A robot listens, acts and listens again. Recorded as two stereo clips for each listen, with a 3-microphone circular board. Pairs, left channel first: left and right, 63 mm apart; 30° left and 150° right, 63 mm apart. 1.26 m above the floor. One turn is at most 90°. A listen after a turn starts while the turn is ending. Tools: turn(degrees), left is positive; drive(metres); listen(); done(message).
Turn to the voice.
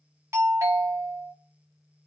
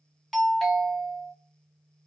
listen()
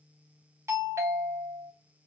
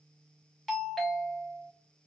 listen()
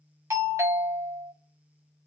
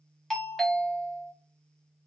done("I can't make out anyone speaking, only a doorbell.")